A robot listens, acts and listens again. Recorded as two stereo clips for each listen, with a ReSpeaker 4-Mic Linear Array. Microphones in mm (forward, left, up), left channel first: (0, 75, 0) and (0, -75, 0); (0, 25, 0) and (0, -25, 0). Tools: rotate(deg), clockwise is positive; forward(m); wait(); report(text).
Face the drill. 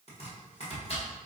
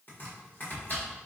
wait()
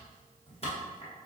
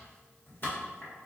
wait()
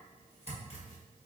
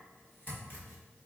report("I can't make out a drill to turn to.")